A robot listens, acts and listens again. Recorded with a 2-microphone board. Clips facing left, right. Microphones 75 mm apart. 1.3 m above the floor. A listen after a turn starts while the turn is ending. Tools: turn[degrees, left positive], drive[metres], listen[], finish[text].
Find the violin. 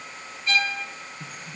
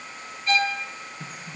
Thought: The violin: about 50° right or 130° right.
Action: turn[-50]
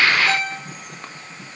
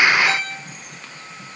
Action: finish[Facing the violin, 2 to 4 m away.]